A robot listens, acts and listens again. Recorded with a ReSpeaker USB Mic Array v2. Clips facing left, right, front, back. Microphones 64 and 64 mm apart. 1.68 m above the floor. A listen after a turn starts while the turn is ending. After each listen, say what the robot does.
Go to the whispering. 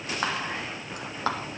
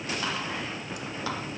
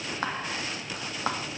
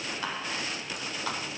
Turn 45° left.
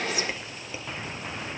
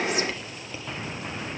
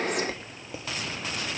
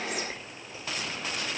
Turn 15° left.
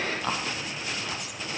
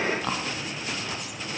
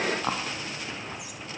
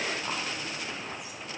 Drive 1.0 m forward.
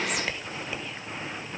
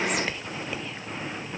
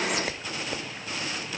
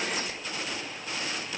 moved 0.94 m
Drive 1.0 m forward.
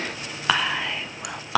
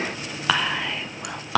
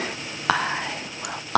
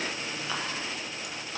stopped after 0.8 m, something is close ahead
I am next to the whispering.